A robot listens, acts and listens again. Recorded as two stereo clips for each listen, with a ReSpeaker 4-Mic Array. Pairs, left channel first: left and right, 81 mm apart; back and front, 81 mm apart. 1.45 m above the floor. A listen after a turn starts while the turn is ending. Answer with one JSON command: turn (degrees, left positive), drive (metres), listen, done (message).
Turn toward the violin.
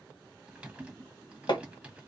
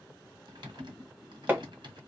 {"listen": true}
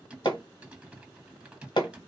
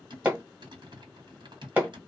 {"listen": true}
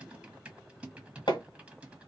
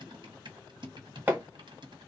{"done": "I can't make out a violin to turn to."}